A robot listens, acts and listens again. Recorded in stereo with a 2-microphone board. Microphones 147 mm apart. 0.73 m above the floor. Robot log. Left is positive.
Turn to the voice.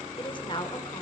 note: The woman speaking: about 35° left or 145° left.
cmd yaw +35
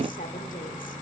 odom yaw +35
cmd idle
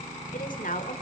note: So it is at 110° left.
cmd yaw +110
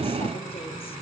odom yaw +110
cmd idle
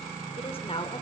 note: The woman speaking is now 40° left.
cmd yaw +40
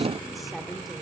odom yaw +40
cmd idle
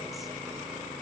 cmd idle
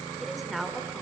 end: Found it: a woman speaking, straight ahead, 2 to 4 m away.